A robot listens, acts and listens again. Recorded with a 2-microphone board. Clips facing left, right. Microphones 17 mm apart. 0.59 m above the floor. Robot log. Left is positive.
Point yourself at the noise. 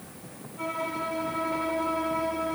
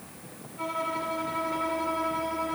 cmd yaw -30
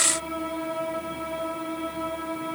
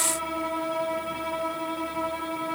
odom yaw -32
note: So it is at 140° right.
cmd yaw -140
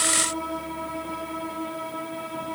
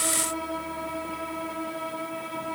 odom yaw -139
end: Found it: a violin, straight ahead, 2 to 4 m away.